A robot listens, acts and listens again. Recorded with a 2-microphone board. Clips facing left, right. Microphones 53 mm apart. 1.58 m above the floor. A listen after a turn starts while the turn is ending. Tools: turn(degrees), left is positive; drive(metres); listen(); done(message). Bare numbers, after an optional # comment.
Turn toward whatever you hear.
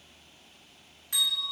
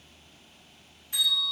turn(90)
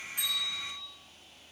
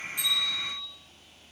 # So it is at 10° left.
turn(10)
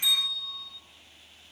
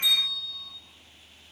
done("Facing the bell.")